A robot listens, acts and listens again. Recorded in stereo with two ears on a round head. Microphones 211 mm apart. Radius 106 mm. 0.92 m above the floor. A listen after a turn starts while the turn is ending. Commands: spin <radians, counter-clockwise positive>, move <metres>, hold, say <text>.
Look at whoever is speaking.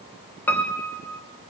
hold
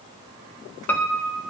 hold
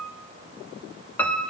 say I can't make out anyone speaking, only a piano.